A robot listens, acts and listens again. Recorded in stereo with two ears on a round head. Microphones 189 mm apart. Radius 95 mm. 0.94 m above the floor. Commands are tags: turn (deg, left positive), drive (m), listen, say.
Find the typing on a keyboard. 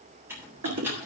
<turn deg="-30"/>
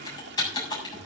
<turn deg="20"/>
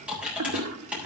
<say>Facing the typing on a keyboard, over 4 m away.</say>